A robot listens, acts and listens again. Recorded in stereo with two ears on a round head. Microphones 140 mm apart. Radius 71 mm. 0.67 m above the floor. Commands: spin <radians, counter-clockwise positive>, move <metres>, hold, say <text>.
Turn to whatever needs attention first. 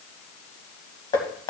hold
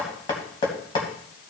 hold
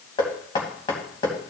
say I can't make out anything urgent to turn to.